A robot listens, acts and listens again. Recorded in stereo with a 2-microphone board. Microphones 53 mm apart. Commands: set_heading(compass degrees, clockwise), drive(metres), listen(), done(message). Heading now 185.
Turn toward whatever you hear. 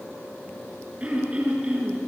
set_heading(200)
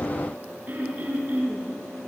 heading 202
set_heading(347)
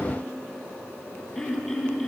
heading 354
done("Facing the throat clearing, over 4 m away.")